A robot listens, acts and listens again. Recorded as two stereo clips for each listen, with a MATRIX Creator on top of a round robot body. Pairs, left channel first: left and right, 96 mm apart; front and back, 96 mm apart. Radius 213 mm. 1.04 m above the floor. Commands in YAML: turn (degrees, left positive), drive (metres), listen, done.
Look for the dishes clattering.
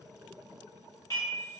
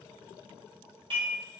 turn: 145
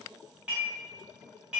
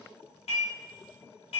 turn: -10
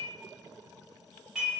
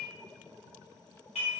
done: "Facing the dishes clattering, under 1 m away."